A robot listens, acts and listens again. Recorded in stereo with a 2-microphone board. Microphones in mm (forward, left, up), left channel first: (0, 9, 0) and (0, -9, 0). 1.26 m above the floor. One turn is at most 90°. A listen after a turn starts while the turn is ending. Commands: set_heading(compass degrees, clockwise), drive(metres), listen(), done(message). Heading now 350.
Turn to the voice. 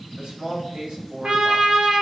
set_heading(50)
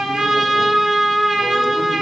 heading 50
listen()
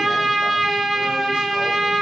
listen()
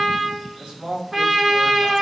set_heading(110)
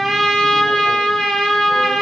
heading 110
listen()
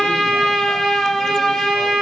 listen()
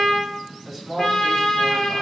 done("Facing the man speaking, 2 to 4 m away.")